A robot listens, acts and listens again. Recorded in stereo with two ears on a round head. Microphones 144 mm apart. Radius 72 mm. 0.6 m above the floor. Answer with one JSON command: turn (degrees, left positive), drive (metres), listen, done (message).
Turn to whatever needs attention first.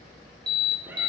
{"turn": -25}
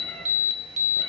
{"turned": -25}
{"turn": -130}
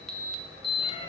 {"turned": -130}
{"done": "Found it: an alarm, straight ahead."}